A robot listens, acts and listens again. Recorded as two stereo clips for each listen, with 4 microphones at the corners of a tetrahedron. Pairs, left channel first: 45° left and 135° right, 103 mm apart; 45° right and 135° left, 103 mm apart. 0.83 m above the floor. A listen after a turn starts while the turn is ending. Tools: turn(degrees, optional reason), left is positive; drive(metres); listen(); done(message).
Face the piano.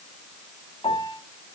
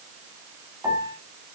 turn(degrees=75, reason="The piano: 75° left.")
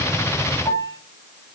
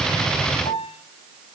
turn(degrees=-20, reason="The piano is now 20° right.")
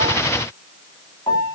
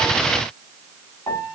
done("Facing the piano, 1 to 2 m away.")